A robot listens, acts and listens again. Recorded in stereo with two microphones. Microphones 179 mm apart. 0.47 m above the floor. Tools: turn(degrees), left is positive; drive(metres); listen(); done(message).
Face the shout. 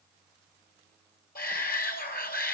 turn(degrees=55)
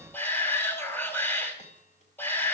turn(degrees=10)
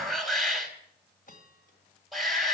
done("Found it: a shout, straight ahead.")